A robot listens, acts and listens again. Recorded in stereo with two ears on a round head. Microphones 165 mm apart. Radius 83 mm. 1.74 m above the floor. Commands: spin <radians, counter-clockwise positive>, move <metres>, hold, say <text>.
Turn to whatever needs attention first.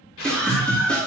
spin 0.52
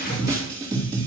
spin -0.44
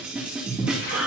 say Found it: a scream, straight ahead.